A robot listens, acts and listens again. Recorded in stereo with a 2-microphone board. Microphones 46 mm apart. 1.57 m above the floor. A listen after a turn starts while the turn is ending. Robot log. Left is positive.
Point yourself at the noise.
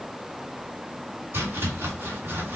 note: The chopping: about 55° right or 125° right.
cmd yaw -55
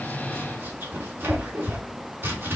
note: So it is at 65° right.
cmd yaw -65
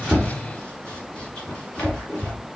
note: The chopping is now 20° left.
cmd yaw +20
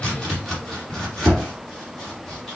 end: Found it: chopping, straight ahead.